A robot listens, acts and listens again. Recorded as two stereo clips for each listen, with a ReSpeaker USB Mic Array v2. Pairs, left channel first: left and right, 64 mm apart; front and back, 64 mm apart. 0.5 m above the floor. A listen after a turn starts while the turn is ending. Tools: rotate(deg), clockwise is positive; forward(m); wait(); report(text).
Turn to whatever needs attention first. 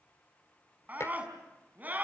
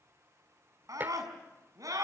rotate(155)
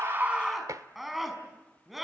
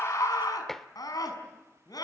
report("Found it: a scream, straight ahead, over 4 m away.")